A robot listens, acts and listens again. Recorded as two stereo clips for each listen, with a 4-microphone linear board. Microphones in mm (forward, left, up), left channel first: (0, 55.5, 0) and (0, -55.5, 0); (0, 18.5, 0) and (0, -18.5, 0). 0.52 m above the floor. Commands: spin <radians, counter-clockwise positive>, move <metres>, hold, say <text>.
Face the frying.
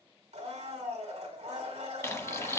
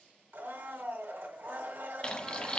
spin 0.44
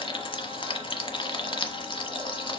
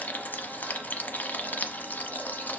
spin 2.27
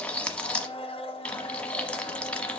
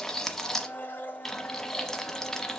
spin 0.17
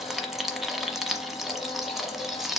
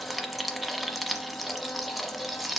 say Found it: frying, straight ahead, 1 to 2 m away.